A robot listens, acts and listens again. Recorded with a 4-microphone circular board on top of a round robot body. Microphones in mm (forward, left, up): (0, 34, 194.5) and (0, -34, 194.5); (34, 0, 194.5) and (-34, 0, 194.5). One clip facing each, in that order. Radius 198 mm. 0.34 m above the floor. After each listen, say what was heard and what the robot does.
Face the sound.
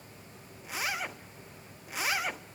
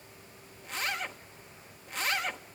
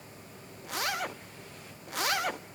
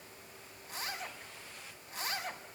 Facing the zipper.